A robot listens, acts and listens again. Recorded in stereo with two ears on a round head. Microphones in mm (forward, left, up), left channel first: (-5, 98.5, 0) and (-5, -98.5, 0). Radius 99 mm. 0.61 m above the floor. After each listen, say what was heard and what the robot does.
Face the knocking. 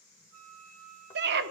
Keep listening.
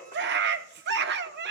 Keep listening.
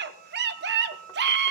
I can't make out knocking to turn to.